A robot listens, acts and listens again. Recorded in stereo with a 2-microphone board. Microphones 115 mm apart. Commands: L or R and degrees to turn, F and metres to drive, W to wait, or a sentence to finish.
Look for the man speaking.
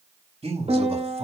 R75
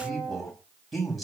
Facing the man speaking, over 4 m away.